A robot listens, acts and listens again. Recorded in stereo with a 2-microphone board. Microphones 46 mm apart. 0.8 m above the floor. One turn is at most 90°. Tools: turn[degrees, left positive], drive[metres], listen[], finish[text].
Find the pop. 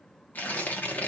Action: listen[]
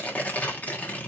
Action: listen[]
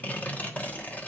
Action: finish[I can't make out a pop, only tearing paper.]